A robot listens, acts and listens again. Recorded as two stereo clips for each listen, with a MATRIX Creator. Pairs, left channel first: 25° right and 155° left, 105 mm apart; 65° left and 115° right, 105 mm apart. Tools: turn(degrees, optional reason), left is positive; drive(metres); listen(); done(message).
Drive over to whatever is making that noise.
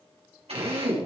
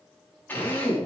turn(degrees=140, reason="The drill: 140° left.")
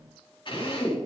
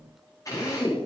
turn(degrees=15, reason="The drill is now 15° left.")
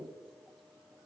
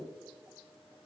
listen()
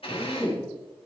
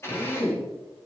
drive(metres=1.0)
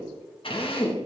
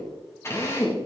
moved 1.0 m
drive(metres=1.0)
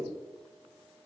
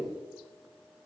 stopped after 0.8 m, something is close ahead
listen()
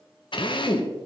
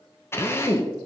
done("I am next to the drill.")